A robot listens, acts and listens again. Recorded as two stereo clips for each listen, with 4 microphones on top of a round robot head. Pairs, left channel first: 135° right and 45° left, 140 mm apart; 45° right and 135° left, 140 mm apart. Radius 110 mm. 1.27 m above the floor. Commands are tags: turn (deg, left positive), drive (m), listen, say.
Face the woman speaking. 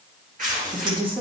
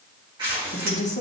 <turn deg="-10"/>
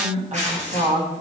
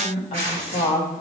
<say>Found it: a woman speaking, straight ahead.</say>